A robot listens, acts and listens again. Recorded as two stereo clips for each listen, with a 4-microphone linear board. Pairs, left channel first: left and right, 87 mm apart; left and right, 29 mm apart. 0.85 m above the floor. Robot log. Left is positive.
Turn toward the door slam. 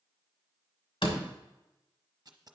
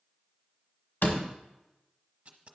cmd yaw +90
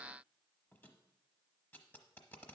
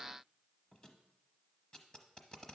end: I heard a door slam from this way, but can't make it out now.